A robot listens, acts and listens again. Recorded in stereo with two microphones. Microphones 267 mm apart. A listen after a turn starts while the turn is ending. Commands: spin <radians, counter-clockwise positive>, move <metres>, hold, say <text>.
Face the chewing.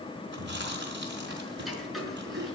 spin -0.70
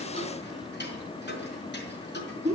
say Found it: chewing, straight ahead.